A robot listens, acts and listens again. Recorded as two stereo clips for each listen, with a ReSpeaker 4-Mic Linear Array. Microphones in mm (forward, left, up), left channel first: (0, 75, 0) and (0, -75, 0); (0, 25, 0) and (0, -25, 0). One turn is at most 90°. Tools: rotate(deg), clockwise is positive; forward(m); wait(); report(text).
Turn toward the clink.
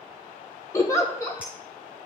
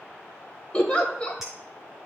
wait()
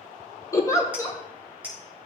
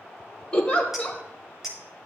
rotate(30)
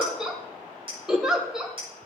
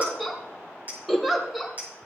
rotate(90)
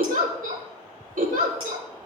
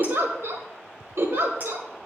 rotate(55)
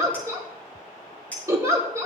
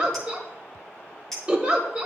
rotate(-10)
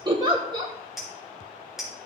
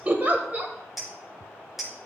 report("Found it: a clink, straight ahead, over 4 m away.")